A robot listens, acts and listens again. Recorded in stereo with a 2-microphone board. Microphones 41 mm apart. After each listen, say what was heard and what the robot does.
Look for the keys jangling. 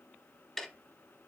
Keep listening.
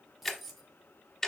Turn 30° right.
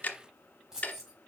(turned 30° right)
Turn 30° right.
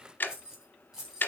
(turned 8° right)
Turn 30° right.
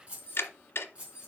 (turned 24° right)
So it is at 150° right. Turn 150° right.
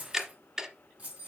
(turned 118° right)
The keys jangling is now 30° right. Turn 30° right.
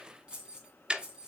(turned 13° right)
The keys jangling is now 20° right. Turn 20° right.
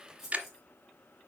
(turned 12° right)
Facing the keys jangling.